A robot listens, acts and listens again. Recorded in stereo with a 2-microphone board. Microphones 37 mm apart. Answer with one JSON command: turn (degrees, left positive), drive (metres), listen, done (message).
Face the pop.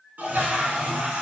{"listen": true}
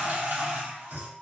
{"listen": true}
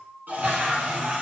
{"done": "I can't make out a pop, only a toilet flushing."}